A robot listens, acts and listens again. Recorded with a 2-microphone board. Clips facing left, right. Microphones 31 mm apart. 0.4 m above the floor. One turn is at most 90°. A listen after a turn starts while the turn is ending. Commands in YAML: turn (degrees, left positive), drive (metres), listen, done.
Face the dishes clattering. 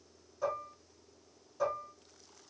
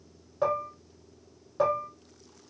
turn: -50
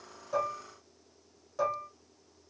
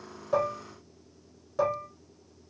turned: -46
turn: -15
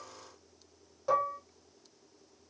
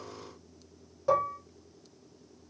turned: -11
done: "Found it: dishes clattering, straight ahead, 1 to 2 m away."